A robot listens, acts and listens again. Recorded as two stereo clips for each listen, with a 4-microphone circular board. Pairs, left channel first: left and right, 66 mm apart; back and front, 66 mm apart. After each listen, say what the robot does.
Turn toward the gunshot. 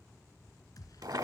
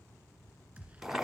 Turn 70° left.
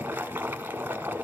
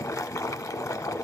Facing where the gunshot came from. I can't hear it now.